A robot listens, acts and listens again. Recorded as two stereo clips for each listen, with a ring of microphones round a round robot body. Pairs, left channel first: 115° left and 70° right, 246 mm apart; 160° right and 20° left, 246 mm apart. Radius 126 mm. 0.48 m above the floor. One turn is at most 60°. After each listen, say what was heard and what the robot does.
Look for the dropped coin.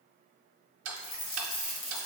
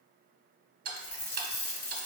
The dropped coin: 150° left. Turn 60° left.
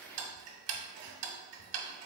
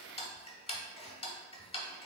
Nothing new. It was at 90° left. Turn 60° left.
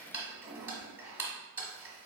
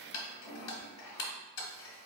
Nothing new. It was at 30° left. Turn 30° left.
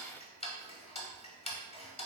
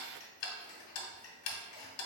I heard a dropped coin from this way, but can't make it out now.